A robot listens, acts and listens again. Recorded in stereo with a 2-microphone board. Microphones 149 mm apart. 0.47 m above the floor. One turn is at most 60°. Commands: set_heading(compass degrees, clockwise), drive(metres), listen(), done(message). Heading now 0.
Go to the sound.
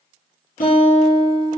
set_heading(300)
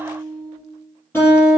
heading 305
set_heading(290)
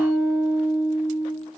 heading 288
drive(1.0)
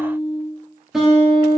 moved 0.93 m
drive(1.0)
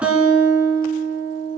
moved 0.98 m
set_heading(298)
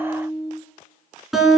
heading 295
drive(1.0)
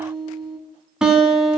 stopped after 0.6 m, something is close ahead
done("Arrived at the guitar, straight ahead.")